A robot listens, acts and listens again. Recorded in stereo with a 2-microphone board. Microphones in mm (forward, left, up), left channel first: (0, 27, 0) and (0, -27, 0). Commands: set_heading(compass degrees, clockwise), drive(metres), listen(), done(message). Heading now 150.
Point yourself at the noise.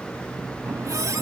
set_heading(240)
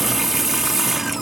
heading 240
set_heading(250)
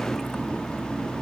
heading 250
done("Facing the running tap.")